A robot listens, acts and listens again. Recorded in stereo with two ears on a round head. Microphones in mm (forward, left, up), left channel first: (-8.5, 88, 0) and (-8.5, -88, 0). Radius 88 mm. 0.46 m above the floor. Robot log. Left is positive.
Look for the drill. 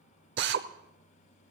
note: The drill: about 60° right or 120° right.
cmd yaw -60
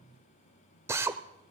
note: So it is at 15° right.
cmd yaw -15
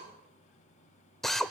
end: Facing the drill.